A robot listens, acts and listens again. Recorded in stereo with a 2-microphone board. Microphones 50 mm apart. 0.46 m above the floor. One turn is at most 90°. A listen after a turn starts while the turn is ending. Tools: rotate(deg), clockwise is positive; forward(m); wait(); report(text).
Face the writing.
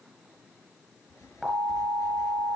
rotate(-90)
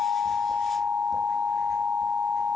wait()
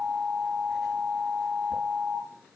wait()
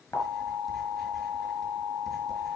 report("I heard writing from this way, but can't make it out now.")